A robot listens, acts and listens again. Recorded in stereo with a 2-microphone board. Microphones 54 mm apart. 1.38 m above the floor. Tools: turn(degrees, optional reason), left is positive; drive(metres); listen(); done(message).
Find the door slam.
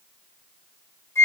listen()
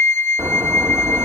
turn(degrees=-50, reason="The door slam: about 50° right or 130° right.")
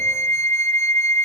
listen()
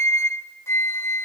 done("I heard a door slam, but can't make it out now. It was about straight ahead or 80° right.")